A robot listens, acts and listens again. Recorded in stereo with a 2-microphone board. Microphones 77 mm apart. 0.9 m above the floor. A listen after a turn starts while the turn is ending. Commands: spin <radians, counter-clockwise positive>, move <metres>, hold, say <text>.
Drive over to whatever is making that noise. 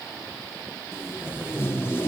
spin 0.52
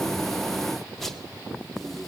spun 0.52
move 1.0
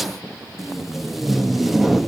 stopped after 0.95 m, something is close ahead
say I am next to the tape being pulled.